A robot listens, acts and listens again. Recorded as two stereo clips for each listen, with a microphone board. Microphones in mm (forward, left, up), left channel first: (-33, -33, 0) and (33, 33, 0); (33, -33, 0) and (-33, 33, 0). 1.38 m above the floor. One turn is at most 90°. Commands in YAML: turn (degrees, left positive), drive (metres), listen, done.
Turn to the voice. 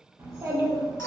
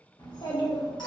turn: -10
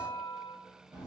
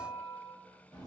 done: "Found it: a child speaking, straight ahead, 1 to 2 m away."